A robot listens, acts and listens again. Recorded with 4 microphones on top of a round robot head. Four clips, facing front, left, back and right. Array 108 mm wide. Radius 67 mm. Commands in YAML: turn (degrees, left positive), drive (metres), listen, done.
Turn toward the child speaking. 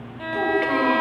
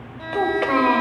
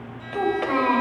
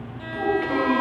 turn: 85
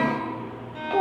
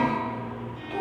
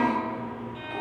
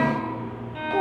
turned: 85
turn: -20
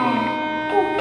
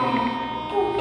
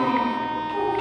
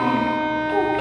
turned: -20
done: "Facing the child speaking, over 4 m away."